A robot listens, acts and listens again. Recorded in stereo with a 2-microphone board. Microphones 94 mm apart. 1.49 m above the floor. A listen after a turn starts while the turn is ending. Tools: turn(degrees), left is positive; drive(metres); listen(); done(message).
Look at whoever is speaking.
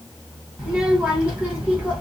turn(degrees=-30)
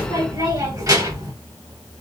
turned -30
turn(degrees=-135)
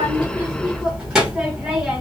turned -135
turn(degrees=-10)
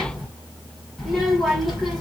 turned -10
done("Facing the child speaking.")